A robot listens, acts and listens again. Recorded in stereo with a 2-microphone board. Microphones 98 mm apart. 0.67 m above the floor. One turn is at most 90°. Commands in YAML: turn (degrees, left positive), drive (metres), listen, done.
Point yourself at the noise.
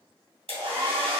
turn: -90
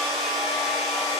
done: "Facing the hair dryer."